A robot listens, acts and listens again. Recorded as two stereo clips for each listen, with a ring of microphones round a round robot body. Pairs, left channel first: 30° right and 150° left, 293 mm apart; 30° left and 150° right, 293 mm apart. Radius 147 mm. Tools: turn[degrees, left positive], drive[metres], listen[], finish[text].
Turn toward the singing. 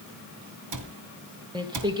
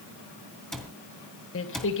Thought: The singing: 75° left.
Action: turn[75]
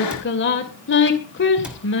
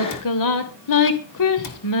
Thought: The singing is now 20° left.
Action: turn[20]
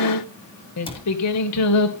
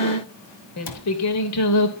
Action: finish[Found it: singing, straight ahead.]